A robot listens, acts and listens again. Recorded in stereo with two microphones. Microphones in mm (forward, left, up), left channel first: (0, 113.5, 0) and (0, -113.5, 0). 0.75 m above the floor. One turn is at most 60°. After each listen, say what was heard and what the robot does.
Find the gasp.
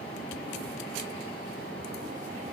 Keep listening.
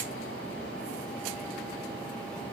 Keep listening.
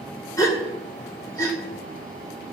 Turn 30° left.
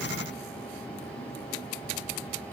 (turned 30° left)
Keep listening.
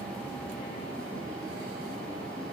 I heard a gasp, but can't make it out now. It was about 15° right or 135° left.